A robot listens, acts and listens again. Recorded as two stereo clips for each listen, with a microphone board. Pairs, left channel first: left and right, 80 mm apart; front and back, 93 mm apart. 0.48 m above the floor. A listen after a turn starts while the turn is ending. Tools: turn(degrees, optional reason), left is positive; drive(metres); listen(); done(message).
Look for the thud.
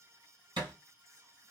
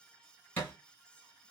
turn(degrees=-70, reason="The thud: 70° right.")
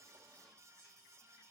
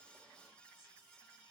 done("Facing where the thud came from. I can't hear it now.")